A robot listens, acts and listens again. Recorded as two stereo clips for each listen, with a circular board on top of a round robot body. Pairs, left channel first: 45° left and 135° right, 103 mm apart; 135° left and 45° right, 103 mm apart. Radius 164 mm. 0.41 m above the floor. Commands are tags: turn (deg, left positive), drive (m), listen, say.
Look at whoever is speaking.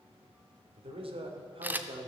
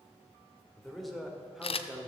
<turn deg="-125"/>
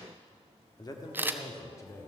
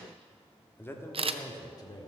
<turn deg="100"/>
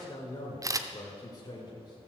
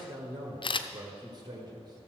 <say>Facing the man speaking.</say>